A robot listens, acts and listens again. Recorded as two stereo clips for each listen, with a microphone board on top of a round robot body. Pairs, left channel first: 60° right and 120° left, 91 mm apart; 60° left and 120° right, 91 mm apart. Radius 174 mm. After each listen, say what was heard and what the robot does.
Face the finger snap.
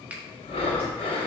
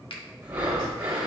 The finger snap: 45° left. Turn 45° left.
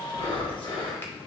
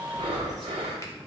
Keep listening.
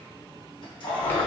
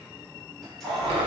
Keep listening.
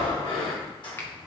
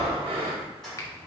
Facing the finger snap, 1 to 2 m away.